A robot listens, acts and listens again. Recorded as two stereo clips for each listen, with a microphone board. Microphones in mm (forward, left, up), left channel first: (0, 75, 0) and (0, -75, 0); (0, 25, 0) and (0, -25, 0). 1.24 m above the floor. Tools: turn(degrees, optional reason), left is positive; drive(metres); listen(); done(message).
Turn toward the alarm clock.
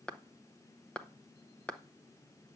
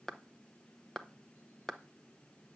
listen()
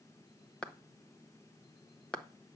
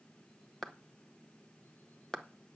listen()
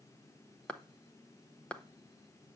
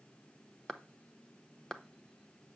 done("I can't make out an alarm clock, only a clap.")